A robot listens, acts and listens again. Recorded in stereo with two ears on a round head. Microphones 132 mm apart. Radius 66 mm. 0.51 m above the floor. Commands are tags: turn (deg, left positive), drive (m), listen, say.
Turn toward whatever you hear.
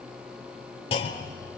<turn deg="40"/>
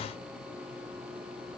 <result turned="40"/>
<listen/>
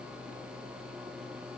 <say>I heard a clunk, but can't make it out now. It was about straight ahead or 100° left.</say>